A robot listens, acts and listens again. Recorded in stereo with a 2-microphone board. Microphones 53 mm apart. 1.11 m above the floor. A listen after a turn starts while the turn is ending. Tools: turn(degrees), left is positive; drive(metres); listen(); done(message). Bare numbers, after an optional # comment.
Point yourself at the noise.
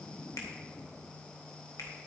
turn(90)
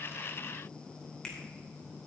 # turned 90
# So it is at 10° left.
turn(10)
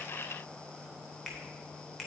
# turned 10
done("Found it: a finger snap, straight ahead, 2 to 4 m away.")